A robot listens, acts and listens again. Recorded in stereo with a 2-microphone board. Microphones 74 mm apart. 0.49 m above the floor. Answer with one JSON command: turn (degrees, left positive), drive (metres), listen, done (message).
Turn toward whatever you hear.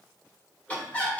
{"turn": 20}
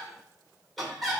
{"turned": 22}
{"done": "Found it: laughter, straight ahead."}